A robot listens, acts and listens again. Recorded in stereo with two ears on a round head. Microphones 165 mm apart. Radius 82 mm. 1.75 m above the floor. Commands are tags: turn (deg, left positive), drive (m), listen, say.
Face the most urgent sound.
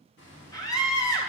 <turn deg="20"/>
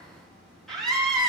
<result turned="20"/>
<say>Found it: a scream, straight ahead, 2 to 4 m away.</say>